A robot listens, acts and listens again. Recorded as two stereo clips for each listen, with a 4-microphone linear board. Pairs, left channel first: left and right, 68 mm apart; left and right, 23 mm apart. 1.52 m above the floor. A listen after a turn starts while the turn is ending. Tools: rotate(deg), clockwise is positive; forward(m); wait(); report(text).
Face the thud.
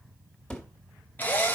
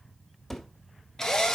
rotate(-30)
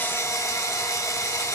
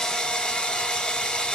wait()
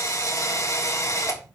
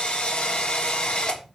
report("I heard a thud, but can't make it out now. It was about 15° right or 135° left.")